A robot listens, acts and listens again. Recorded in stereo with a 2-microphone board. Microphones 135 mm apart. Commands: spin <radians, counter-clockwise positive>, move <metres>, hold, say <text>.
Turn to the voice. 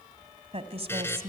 spin -0.87
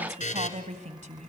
spin -1.31
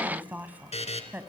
spin -0.26
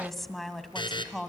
say Found it: a woman speaking, straight ahead.